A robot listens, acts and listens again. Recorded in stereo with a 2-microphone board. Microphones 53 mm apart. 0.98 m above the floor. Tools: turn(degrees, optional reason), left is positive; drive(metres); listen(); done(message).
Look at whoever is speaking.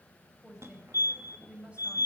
turn(degrees=-20, reason="The woman speaking: about 20° right or 160° right.")
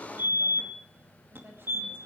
listen()
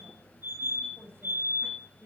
turn(degrees=-135, reason="So it is at 135° right.")
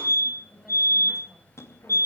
listen()
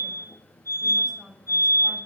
done("Found it: a woman speaking, straight ahead.")